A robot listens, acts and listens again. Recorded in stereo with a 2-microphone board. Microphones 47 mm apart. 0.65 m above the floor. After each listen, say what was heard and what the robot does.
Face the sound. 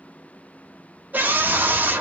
The scream: about 40° right or 140° right. Turn 40° right.
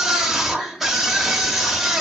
So it is at 10° right. Turn 10° right.
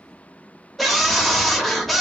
Facing the scream, under 1 m away.